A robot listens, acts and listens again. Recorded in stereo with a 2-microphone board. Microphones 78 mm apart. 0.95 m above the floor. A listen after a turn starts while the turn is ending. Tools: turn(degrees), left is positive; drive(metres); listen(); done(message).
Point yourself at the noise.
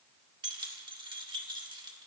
turn(degrees=-75)
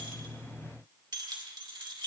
turn(degrees=-80)
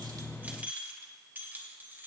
turn(degrees=-30)
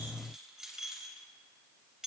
turn(degrees=-10)
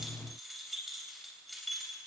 done("Found it: keys jangling, straight ahead, 2 to 4 m away.")